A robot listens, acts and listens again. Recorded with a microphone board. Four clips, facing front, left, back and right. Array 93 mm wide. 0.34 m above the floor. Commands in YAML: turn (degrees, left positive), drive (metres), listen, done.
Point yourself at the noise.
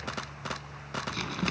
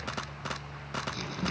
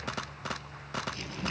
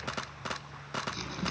done: "Facing the crumpling."